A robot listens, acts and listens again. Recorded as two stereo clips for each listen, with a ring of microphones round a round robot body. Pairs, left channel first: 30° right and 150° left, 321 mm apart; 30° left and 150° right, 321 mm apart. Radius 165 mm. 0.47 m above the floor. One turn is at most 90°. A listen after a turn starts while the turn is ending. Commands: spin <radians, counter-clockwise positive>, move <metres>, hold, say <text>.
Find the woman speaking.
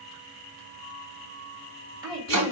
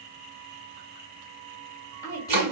spin 1.57
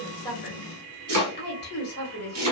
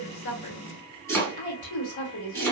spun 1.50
spin 0.35
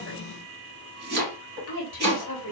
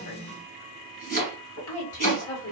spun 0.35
say Facing the woman speaking.